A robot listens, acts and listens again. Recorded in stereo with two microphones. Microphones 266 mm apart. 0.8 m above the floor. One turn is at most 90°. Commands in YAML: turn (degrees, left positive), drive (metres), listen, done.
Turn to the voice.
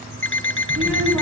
turn: -65
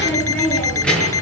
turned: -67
done: "Found it: a child speaking, straight ahead."